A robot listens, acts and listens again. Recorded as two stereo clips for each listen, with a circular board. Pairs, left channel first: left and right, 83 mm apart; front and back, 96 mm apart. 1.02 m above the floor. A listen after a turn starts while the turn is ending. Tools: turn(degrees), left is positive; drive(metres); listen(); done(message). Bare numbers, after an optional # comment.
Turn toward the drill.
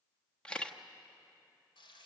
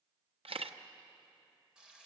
listen()
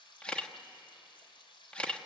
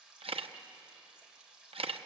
listen()
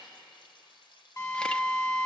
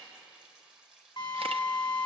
# The drill: 40° left.
turn(40)
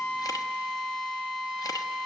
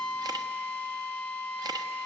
done("Found it: a drill, straight ahead.")